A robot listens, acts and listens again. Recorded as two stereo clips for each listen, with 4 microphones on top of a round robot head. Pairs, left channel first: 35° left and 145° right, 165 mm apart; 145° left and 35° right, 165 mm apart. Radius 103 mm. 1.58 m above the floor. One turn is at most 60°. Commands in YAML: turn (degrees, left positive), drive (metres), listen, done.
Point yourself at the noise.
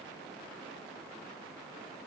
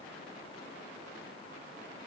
listen: true
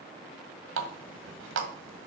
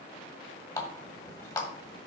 turn: -60
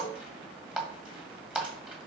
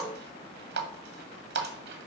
turn: -60
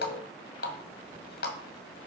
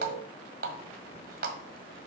done: "Found it: a running tap, straight ahead, 1 to 2 m away."